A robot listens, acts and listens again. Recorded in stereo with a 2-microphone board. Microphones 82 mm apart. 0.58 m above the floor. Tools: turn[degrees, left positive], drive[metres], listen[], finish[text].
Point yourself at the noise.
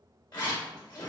Thought: The zipper: about 60° left or 120° left.
Action: turn[60]
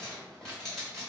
Thought: So it is at 10° left.
Action: turn[10]
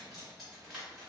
Action: finish[Found it: a zipper, straight ahead.]